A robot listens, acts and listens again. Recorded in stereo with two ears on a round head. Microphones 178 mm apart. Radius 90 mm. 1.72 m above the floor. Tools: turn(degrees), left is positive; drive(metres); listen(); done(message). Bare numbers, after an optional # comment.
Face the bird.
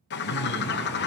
# The bird: about 60° left or 120° left.
turn(60)
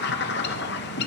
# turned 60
# So it is at 55° left.
turn(55)
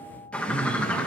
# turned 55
done("Facing the bird.")